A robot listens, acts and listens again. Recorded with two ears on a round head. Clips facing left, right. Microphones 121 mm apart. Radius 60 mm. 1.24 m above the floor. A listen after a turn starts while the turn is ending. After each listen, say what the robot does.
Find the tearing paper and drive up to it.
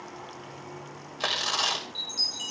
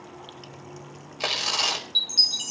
Turn 30° right.
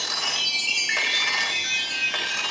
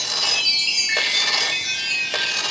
Turn 140° right.
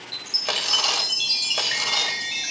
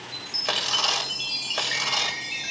Drive 1.0 m forward.
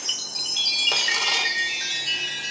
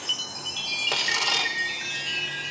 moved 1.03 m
Keep listening.
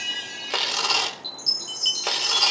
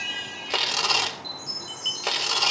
Drive 1.0 m forward.
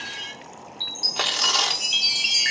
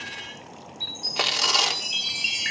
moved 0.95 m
Drive 1.0 m forward.
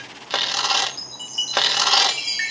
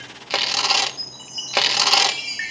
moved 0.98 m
Turn 10° right.
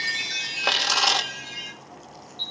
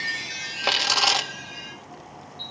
Drive 1.0 m forward.
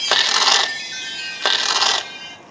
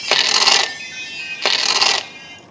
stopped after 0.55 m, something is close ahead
Turn 10° right.
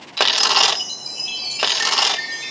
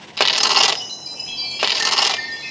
I am next to the tearing paper.